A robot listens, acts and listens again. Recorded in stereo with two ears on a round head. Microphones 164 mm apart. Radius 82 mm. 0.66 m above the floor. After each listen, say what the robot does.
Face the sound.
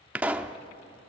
Turn 30° right.
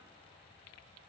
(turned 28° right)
Keep listening.
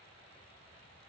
I heard a pop, but can't make it out now. It was about 20° left or 145° right.